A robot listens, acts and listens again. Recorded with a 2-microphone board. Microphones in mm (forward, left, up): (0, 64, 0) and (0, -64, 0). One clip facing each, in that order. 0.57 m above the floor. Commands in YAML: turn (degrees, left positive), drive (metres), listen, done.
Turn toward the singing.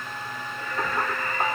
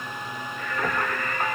turn: 30
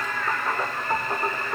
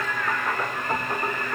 turn: 10
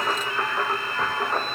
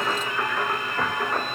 turn: 10
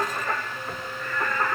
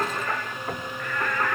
turn: 10
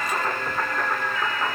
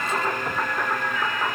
done: "Facing the singing."